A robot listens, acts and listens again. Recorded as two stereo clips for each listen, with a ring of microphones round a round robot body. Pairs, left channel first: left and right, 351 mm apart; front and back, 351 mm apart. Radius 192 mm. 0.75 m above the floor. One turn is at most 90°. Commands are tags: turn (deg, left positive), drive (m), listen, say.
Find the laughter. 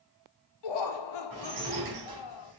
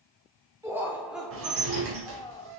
<turn deg="75"/>
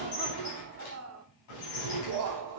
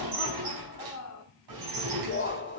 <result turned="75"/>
<turn deg="-60"/>
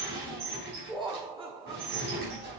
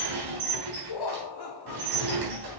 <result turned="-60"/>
<turn deg="-15"/>
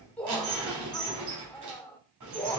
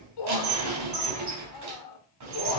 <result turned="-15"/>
<say>Found it: laughter, straight ahead.</say>